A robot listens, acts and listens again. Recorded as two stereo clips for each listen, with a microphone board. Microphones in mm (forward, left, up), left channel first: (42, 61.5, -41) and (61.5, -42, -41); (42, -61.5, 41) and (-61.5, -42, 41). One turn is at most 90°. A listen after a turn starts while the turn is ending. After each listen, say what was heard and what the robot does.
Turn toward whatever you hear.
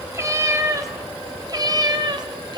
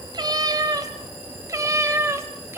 The cat meowing: 120° right. Turn 90° right.
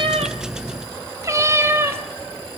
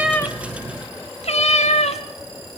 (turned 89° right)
The cat meowing is now 10° right. Turn 10° right.
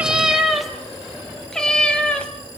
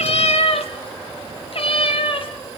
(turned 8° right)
The cat meowing is now 20° left. Turn 20° left.
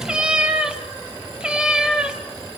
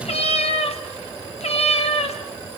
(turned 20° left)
Found it: a cat meowing, straight ahead, 2 to 4 m away.